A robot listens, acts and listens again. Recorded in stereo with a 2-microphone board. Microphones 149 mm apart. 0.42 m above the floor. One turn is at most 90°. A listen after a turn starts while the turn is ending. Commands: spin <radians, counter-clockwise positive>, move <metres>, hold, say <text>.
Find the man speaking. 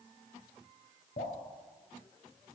hold
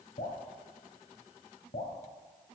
hold
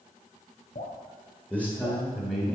spin 0.52
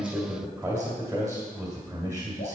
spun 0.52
spin -0.17
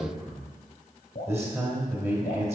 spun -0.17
say Found it: a man speaking, straight ahead.